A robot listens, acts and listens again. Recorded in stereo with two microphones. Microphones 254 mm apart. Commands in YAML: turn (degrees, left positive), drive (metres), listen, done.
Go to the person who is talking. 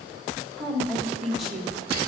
turn: 30
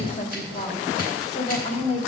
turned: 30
turn: 150
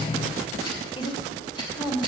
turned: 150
turn: 25
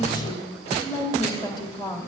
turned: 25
turn: 15
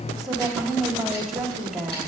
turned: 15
drive: 1.0
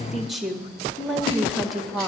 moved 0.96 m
drive: 1.0
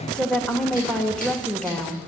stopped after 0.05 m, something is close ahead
done: "I am next to the woman speaking."